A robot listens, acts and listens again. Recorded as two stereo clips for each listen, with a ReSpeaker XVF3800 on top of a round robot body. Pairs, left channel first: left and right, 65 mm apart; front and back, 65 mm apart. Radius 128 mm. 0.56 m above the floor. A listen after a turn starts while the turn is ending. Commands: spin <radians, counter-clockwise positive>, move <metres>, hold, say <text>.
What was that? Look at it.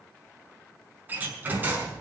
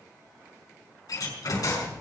spin -0.52
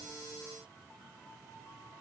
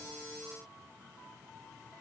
say Facing where the door slam came from. I can't hear it now.